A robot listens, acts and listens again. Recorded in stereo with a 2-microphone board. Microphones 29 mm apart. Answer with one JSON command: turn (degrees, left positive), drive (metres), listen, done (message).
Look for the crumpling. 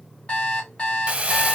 {"turn": -45}
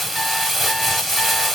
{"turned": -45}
{"done": "Found it: crumpling, straight ahead, under 1 m away."}